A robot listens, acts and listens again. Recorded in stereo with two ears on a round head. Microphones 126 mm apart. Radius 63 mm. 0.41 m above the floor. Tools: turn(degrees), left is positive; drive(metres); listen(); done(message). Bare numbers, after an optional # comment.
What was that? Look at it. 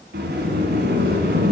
turn(-90)
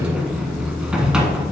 done("Found it: a sliding door, straight ahead, 1 to 2 m away.")